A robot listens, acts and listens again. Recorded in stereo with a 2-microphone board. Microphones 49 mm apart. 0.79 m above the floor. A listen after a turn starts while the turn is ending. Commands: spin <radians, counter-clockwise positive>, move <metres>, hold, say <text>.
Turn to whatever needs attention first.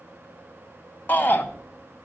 spin 0.70
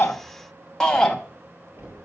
spin 0.17
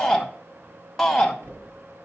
say Facing the shout, under 1 m away.